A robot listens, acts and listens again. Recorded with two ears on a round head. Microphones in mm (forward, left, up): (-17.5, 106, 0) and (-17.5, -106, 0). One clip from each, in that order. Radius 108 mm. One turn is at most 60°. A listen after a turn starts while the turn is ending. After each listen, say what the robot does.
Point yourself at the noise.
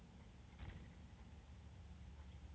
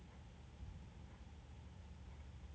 Keep listening.
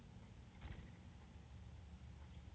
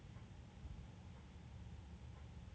Keep listening.
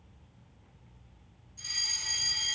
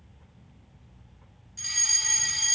Turn 45° right.
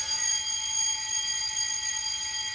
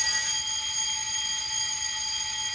Turn 10° right.
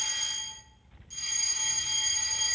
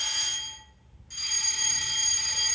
Facing the fire alarm, 2 to 4 m away.